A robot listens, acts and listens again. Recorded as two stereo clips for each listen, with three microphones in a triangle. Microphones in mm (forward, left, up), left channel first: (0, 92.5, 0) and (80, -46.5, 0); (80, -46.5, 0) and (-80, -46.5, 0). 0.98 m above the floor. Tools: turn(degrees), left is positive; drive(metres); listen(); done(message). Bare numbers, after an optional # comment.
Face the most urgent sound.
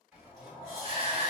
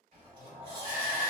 # The shout: 165° left.
turn(165)
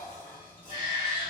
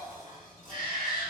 done("Facing the shout.")